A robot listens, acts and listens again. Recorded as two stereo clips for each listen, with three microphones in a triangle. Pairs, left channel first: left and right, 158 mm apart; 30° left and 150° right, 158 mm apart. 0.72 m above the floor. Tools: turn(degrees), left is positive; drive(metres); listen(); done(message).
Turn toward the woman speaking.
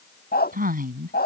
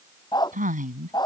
turn(degrees=-115)
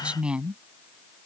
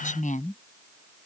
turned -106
done("Found it: a woman speaking, straight ahead.")